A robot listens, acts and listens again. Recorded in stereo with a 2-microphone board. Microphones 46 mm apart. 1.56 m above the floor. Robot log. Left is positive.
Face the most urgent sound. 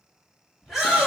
cmd yaw -30
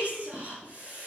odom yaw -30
note: So it is at 145° right.
cmd yaw -145
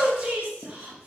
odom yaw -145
note: The shout is now 20° right.
cmd yaw -20
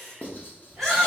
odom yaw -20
end: Facing the shout.